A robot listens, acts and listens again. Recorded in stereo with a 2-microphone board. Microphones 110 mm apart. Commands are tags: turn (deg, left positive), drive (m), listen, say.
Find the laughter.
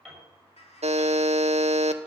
<turn deg="75"/>
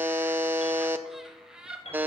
<turn deg="-10"/>
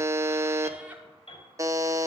<listen/>
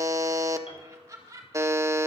<turn deg="-25"/>
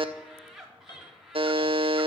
<say>Facing the laughter.</say>